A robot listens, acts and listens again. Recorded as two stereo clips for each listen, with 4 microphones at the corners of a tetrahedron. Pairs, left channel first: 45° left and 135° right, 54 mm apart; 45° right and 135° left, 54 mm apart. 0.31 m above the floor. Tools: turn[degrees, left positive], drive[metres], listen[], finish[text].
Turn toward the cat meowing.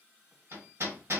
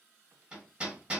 Action: listen[]
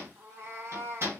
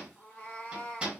Thought: The cat meowing: 105° right.
Action: turn[-105]
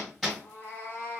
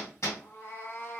Action: finish[Found it: a cat meowing, straight ahead, 1 to 2 m away.]